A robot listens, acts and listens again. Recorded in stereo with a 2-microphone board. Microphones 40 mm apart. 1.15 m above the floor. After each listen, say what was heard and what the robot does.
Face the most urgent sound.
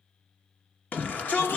The shout: about 40° left or 140° left. Turn 40° left.
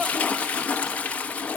Keep listening.
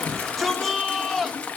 Facing the shout, 1 to 2 m away.